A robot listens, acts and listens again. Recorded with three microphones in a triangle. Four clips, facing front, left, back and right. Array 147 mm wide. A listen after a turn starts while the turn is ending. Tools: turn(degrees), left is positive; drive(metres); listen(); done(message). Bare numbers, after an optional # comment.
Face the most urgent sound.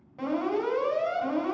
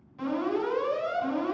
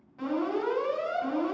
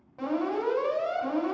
# The alarm: 60° right.
turn(-60)
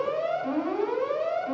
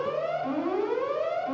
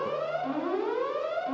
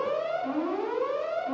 done("Found it: an alarm, straight ahead, 2 to 4 m away.")